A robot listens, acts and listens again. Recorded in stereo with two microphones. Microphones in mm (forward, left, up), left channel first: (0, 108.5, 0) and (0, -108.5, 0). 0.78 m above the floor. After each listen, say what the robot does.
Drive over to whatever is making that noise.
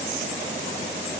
Keep listening.
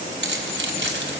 Turn 65° right.
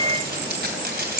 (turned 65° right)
Turn 50° right.
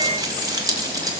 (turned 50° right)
Turn 20° right.
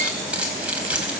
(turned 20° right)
Drive 1.0 m forward.
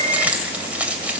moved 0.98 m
Drive 1.0 m forward.
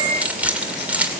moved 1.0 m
Drive 1.0 m forward.
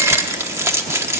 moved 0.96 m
Turn 15° right.
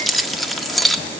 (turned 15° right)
Drive 1.0 m forward.
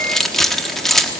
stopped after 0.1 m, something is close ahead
I am next to the keys jangling.